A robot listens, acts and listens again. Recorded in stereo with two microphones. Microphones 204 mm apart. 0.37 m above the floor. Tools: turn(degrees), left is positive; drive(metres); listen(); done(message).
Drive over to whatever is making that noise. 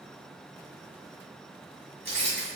turn(degrees=-70)
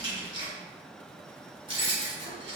turn(degrees=-30)
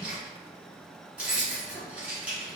drive(metres=1.0)
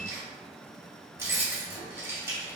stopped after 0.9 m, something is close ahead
turn(degrees=-15)
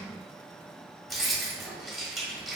done("I am next to the keys jangling.")